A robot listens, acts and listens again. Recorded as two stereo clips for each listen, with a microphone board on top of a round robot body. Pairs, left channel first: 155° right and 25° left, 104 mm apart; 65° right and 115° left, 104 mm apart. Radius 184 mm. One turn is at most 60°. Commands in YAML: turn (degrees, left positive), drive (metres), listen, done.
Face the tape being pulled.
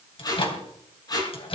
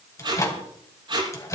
turn: 60
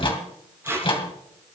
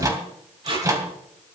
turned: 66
turn: 60
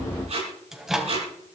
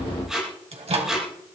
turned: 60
turn: 25
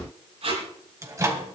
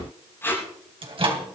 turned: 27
done: "Found it: tape being pulled, straight ahead."